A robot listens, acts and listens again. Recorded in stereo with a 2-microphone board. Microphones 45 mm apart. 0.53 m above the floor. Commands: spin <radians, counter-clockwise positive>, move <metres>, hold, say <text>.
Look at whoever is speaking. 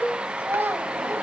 spin -0.87
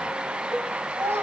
spin -1.40
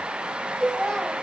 say Facing the child speaking.